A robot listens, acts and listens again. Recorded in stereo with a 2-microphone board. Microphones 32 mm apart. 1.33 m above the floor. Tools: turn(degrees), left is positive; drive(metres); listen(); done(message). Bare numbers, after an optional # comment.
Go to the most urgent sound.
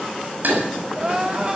# The crying: about 30° right or 150° right.
turn(-30)
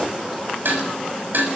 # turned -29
listen()
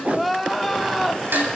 drive(1.0)
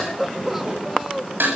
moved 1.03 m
drive(1.0)
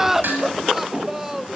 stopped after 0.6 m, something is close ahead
# The crying is now 10° right.
turn(-10)
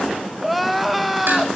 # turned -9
done("Arrived at the crying, straight ahead.")